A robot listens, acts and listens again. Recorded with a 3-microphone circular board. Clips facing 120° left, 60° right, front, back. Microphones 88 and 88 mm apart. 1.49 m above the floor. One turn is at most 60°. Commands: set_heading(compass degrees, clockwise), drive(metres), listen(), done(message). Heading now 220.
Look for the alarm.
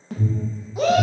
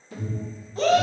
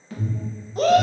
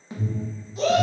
set_heading(160)
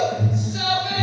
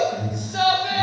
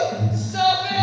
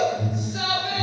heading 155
set_heading(110)
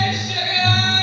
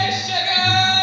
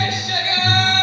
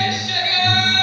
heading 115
done("Found it: an alarm, straight ahead.")